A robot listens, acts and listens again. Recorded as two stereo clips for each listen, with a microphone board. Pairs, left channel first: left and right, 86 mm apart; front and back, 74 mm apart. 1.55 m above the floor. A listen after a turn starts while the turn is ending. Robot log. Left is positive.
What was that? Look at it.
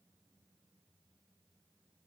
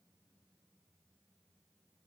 cmd idle
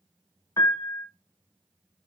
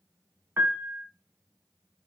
note: The piano: 130° left.
cmd yaw +130
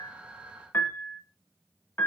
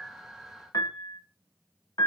note: The piano is now 30° left.
cmd yaw +30
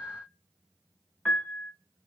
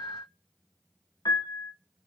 note: The piano is now 15° left.
cmd yaw +15
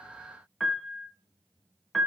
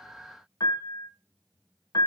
end: Found it: a piano, straight ahead.